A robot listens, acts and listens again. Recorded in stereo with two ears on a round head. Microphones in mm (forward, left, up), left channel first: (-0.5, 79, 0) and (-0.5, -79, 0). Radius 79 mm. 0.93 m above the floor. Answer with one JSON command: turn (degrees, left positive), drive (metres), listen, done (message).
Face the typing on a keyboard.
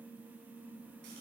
{"listen": true}
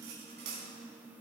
{"listen": true}
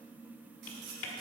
{"turn": 90}
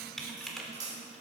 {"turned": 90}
{"done": "Found it: typing on a keyboard, straight ahead, 1 to 2 m away."}